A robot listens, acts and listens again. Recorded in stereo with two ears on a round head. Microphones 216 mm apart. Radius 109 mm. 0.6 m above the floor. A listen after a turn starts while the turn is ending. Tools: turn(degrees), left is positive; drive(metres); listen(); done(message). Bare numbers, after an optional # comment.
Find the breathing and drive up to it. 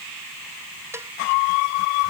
listen()
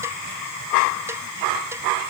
listen()
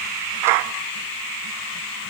done("I can't make out breathing, only a cowbell.")